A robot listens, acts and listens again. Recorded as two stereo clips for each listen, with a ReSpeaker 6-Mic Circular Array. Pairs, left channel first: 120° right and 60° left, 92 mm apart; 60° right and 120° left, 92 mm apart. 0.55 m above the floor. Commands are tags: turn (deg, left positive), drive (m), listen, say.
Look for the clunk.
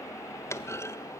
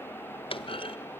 <turn deg="-60"/>
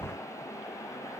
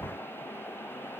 <say>Facing where the clunk came from. I can't hear it now.</say>